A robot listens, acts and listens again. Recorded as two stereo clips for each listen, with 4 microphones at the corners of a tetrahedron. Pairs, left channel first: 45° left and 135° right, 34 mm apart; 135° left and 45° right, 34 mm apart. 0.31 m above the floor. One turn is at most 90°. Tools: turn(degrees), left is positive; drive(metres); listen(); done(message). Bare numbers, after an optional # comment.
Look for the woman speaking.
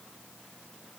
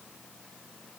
listen()
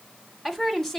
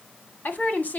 # The woman speaking: 120° left.
turn(90)
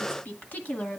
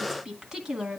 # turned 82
# The woman speaking is now 20° left.
turn(20)
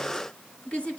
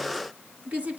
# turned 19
# The woman speaking is now 10° right.
turn(-10)
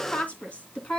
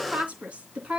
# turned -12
done("Found it: a woman speaking, straight ahead, 2 to 4 m away.")